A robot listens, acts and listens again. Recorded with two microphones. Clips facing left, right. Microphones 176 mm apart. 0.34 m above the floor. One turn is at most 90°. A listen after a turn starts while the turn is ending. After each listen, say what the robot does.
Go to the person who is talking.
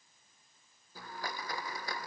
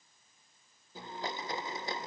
Keep listening.
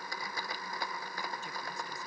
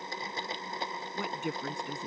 Turn 65° right.
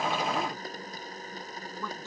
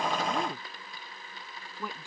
Turn 15° right.
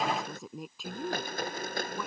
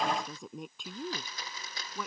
Drive 1.0 m forward.
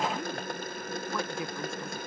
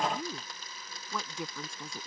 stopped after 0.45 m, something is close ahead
Blocked. The woman speaking is further on, straight ahead.